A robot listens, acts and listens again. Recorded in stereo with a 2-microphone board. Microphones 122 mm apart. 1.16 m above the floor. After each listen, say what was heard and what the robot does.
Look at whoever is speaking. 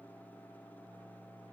Keep listening.
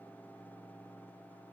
Keep listening.
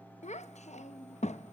The child speaking: about 70° left or 110° left. Turn 70° left.
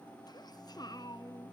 So it is at 35° left. Turn 35° left.
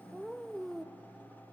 Facing the child speaking, under 1 m away.